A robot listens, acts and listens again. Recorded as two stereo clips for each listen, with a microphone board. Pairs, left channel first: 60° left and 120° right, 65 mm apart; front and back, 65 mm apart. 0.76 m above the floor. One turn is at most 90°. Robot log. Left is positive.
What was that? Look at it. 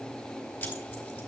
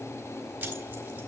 note: The keys jangling: 125° left.
cmd yaw +90
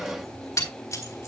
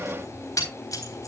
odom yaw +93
note: The keys jangling is now 30° left.
cmd yaw +30
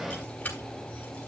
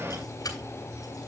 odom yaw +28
end: Found it: keys jangling, straight ahead, 2 to 4 m away.